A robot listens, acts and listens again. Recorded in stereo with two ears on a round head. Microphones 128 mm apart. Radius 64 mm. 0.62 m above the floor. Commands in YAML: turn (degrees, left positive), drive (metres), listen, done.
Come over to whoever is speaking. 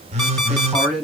turn: 30
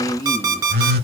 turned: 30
turn: 150
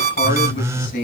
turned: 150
turn: 70
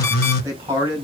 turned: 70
turn: -20
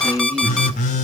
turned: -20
turn: -10
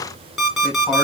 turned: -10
listen: true
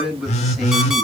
drive: 1.0
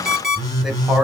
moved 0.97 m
drive: 1.0
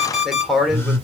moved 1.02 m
drive: 1.0
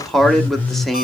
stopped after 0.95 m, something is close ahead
done: "I am next to the man speaking."